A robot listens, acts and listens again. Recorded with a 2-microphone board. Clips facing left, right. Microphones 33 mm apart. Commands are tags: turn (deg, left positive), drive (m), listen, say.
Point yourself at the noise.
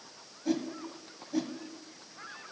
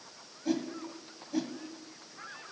<turn deg="-30"/>
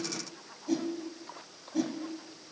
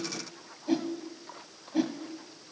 <turn deg="-145"/>
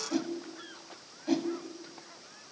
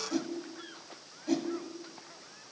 <turn deg="20"/>
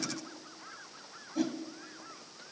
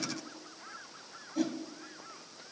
<say>Found it: a whoosh, straight ahead.</say>